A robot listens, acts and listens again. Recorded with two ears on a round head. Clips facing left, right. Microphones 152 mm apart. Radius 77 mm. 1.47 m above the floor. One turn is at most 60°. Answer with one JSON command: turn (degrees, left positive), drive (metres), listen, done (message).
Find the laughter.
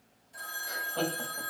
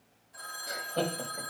{"turn": -20}
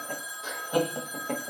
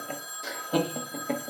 {"turn": -30}
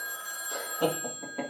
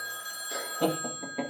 {"turn": -30}
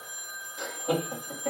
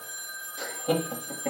{"turn": -20}
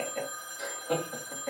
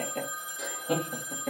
{"turn": -60}
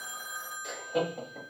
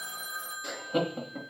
{"turn": -60}
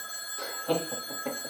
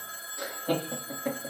{"turn": -20}
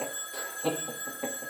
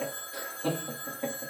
{"done": "Facing the laughter, 1 to 2 m away."}